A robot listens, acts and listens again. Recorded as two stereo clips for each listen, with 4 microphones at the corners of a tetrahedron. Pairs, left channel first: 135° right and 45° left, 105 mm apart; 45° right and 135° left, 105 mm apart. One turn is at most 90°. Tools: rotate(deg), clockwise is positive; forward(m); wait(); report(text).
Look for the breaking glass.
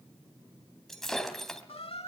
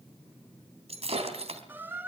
rotate(-90)
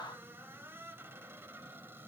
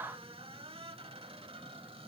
rotate(-50)
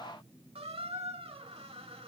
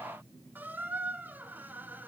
report("Facing where the breaking glass came from. I can't hear it now.")